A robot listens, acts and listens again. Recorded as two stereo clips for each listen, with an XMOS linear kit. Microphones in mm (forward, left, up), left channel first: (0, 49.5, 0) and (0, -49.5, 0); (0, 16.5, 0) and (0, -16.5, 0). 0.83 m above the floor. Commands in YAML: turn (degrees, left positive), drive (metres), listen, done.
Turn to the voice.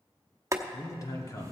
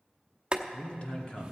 turn: 35
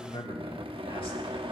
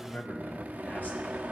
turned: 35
turn: 110
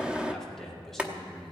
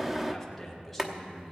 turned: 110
done: "Found it: a man speaking, straight ahead, 1 to 2 m away."